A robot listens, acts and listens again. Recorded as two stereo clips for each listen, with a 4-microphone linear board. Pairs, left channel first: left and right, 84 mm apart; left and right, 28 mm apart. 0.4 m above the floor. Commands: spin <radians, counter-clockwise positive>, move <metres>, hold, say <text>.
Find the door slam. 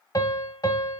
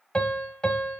hold
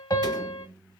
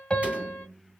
spin -0.96
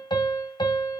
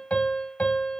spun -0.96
hold
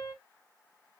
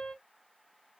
say I heard a door slam, but can't make it out now. It was about straight ahead or 70° right.